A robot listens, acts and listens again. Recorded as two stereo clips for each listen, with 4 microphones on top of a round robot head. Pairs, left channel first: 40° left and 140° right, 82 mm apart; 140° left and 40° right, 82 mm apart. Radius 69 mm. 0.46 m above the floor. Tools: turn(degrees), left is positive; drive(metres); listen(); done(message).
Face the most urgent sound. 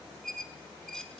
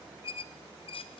listen()
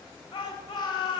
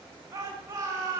turn(degrees=10)
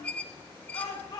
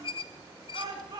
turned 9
done("Facing the shout, over 4 m away.")